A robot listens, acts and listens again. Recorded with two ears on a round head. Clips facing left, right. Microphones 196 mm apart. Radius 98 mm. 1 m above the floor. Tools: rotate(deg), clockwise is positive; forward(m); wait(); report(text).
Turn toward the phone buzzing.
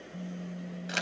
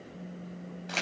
rotate(-70)
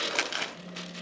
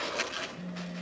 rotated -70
report("Facing the phone buzzing, 1 to 2 m away.")